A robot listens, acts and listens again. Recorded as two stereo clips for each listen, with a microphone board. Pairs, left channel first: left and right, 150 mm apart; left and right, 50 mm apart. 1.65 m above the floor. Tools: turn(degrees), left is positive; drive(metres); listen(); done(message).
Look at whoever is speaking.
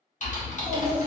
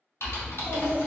turn(degrees=30)
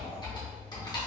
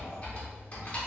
turn(degrees=-20)
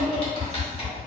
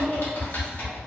done("Found it: a child speaking, straight ahead.")